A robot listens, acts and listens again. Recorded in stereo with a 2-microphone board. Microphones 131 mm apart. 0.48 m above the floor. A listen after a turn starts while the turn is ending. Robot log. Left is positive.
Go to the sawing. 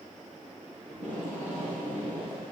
cmd idle
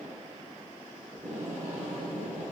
cmd idle
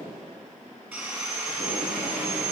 note: The sawing: about 20° right or 160° right.
cmd yaw -20
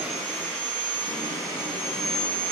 cmd fwd 1.0
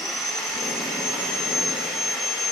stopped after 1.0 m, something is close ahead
end: I am next to the sawing.